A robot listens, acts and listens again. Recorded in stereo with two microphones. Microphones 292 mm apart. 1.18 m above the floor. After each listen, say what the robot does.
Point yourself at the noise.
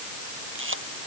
Turn 45° right.
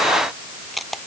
Facing the camera shutter.